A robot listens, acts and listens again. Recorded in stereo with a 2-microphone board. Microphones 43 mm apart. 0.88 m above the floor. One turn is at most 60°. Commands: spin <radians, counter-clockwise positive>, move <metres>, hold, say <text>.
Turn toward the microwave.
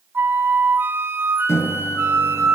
spin 1.05
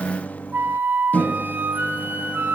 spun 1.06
spin 0.70
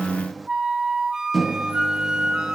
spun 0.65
say Facing the microwave, under 1 m away.